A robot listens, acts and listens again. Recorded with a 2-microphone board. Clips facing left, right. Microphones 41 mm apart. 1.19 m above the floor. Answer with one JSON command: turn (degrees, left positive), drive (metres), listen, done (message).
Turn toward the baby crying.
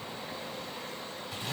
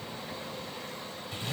{"listen": true}
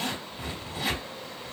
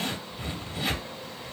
{"listen": true}
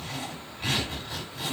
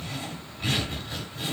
{"done": "I can't make out a baby crying to turn to."}